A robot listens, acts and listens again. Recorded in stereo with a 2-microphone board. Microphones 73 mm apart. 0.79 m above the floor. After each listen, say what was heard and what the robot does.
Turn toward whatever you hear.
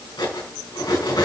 The cutlery clinking: about 70° left or 110° left. Turn 70° left.
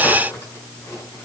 So it is at 35° left. Turn 35° left.
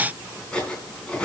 The cutlery clinking is now 10° left. Turn 10° left.
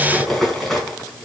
Found it: cutlery clinking, straight ahead, 2 to 4 m away.